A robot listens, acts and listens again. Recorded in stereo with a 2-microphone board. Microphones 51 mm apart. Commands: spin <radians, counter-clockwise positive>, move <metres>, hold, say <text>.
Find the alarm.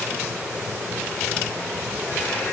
hold
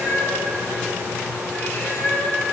hold
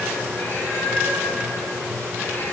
say I can't make out an alarm to turn to.